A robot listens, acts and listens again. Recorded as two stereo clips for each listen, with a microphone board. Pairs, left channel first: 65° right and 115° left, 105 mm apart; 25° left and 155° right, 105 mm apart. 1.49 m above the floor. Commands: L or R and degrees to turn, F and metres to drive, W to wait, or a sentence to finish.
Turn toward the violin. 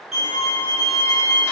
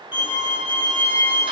L125
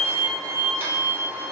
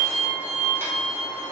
R20
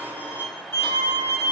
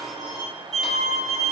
Facing the violin.